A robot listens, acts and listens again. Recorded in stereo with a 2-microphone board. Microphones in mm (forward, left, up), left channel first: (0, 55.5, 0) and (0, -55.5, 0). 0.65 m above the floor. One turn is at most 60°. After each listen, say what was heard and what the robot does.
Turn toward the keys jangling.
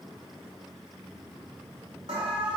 Keep listening.
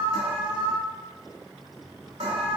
Keep listening.
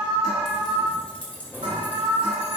The keys jangling: about 15° left or 165° left. Turn 15° left.
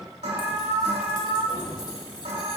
The keys jangling: about 40° left or 140° left. Turn 40° left.
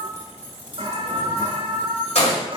So it is at 105° left. Turn 60° left.
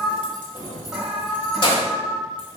The keys jangling is now 50° left. Turn 50° left.
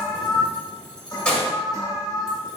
The keys jangling is now 10° left. Turn 10° left.
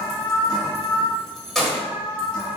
Found it: keys jangling, straight ahead, 1 to 2 m away.